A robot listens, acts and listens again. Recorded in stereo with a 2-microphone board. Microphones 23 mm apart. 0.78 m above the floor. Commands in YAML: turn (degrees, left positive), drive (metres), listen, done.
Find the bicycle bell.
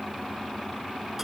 listen: true
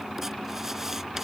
listen: true
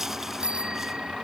turn: -35
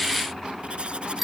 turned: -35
done: "Found it: a bicycle bell, straight ahead."